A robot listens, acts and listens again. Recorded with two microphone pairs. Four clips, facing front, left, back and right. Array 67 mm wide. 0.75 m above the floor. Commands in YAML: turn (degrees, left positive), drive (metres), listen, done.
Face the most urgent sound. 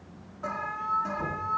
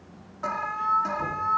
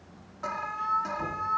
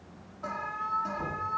turn: 110
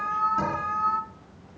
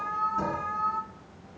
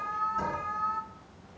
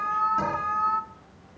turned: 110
turn: -45
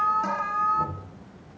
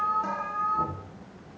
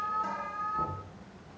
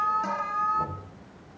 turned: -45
done: "Facing the alarm."